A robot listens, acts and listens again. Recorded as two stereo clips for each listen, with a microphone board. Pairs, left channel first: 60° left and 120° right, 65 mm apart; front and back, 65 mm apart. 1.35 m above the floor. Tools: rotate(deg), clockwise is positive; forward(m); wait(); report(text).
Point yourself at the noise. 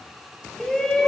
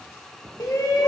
rotate(20)
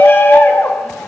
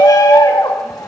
report("Facing the shout.")